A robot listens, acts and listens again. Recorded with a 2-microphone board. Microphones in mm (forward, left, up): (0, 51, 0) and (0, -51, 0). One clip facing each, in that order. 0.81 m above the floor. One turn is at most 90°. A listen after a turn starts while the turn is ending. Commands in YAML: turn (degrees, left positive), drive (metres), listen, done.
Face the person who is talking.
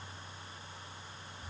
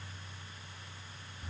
listen: true
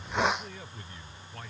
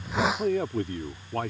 turn: -70
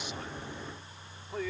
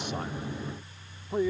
turn: -25
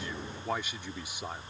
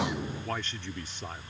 turn: 10
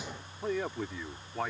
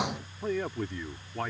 done: "Facing the man speaking."